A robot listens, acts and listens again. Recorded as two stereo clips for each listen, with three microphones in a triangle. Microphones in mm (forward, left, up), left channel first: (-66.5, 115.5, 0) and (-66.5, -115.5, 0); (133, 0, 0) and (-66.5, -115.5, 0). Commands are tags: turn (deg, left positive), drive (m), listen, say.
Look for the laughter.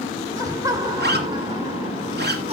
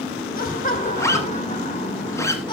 <turn deg="-35"/>
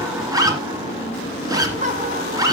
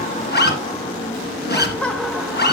<turn deg="-55"/>
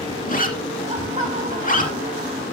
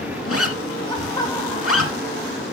<turn deg="-40"/>
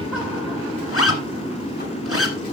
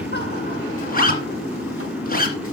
<listen/>
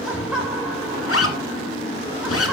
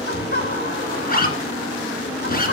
<say>Facing the laughter.</say>